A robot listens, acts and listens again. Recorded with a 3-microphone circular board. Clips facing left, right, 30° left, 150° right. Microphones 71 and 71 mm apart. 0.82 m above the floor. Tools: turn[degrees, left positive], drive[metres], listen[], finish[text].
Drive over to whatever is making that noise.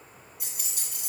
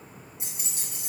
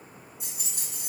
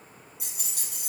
Thought: The keys jangling: 155° right.
Action: turn[-155]
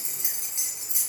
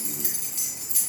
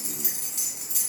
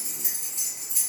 Thought: The keys jangling is now 20° left.
Action: turn[20]
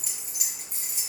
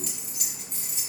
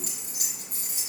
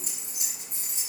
Action: drive[1.0]
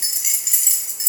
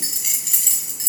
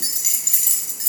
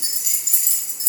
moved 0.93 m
Action: drive[1.0]
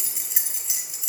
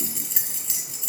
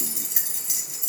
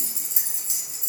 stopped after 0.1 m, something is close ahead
Thought: The keys jangling is now 10° left.
Action: turn[10]
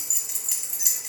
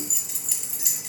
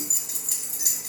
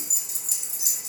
Action: finish[Arrived at the keys jangling, straight ahead.]